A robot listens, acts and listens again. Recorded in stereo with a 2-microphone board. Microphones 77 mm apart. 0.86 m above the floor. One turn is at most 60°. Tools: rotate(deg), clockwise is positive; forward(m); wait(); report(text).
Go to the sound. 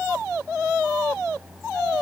wait()
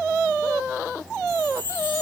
rotate(-30)
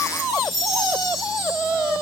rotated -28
forward(1.0)
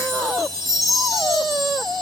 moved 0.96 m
forward(1.0)
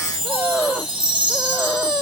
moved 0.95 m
rotate(10)
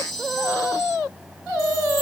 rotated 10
forward(1.0)
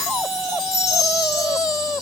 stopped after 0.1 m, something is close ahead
report("I am next to the chime.")